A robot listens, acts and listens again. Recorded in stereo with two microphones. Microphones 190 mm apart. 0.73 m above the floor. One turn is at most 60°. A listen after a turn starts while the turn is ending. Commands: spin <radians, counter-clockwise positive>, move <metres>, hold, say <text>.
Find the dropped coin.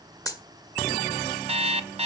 spin 0.35
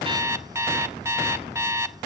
hold
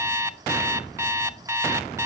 say I heard a dropped coin, but can't make it out now. It was about straight ahead or 140° left.